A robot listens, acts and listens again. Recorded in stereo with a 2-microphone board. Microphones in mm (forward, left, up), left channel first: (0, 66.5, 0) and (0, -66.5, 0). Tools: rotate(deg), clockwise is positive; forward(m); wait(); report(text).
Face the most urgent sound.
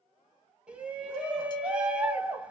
rotate(30)
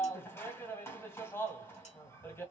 rotate(-20)
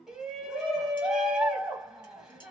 report("Facing the shout, 1 to 2 m away.")